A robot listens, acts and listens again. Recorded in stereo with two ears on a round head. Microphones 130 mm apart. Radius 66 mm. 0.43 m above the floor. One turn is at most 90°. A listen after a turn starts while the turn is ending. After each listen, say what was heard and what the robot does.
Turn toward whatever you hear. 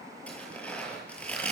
Turn 30° left.
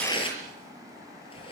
So it is at 140° left. Turn 90° left.
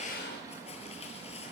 The tearing paper is now 45° left. Turn 45° left.
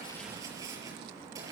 The tearing paper is now 20° right. Turn 20° right.
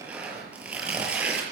The tearing paper is now 10° right. Turn 10° right.
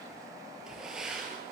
Facing the tearing paper, over 4 m away.